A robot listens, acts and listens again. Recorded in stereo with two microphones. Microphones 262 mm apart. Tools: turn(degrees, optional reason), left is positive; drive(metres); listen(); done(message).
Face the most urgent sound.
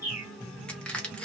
listen()
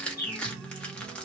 listen()
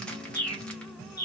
done("I can't make out anything urgent, only crushing and a bird.")